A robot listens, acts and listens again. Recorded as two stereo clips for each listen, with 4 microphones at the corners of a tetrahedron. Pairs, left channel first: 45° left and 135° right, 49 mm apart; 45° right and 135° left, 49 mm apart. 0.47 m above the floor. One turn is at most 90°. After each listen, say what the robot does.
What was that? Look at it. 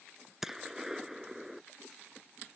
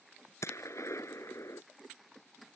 Turn 50° right.
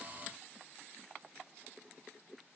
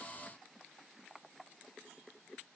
I heard a gunshot from this way, but can't make it out now.